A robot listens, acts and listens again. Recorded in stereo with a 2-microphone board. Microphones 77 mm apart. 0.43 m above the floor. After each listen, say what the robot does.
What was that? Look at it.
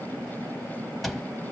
Turn 30° left.
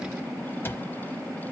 Turn 150° left.
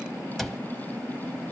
Found it: a cupboard door, straight ahead.